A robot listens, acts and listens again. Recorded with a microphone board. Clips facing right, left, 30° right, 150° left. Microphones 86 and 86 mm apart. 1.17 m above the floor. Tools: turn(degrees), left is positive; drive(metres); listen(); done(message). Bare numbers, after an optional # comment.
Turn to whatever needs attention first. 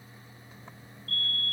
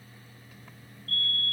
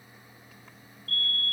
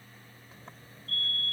# The fire alarm: 45° right.
turn(-45)
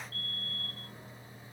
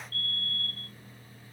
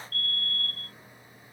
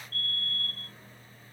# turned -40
# The fire alarm is now 10° right.
turn(-10)
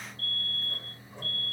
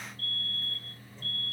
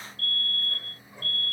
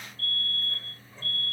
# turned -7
done("Facing the fire alarm.")